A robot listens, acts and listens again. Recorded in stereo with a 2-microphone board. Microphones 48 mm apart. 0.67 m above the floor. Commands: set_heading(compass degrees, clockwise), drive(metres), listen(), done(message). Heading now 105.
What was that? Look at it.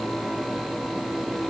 listen()
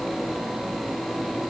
listen()
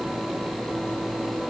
done("I can't make out anything.")